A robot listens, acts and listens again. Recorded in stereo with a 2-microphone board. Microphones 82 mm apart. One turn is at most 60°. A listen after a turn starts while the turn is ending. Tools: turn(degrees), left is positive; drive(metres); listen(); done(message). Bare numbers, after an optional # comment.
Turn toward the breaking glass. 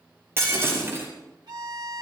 # The breaking glass: about 30° right or 150° right.
turn(-30)
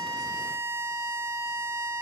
listen()
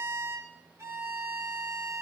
done("I heard breaking glass, but can't make it out now. It was about straight ahead or 120° right.")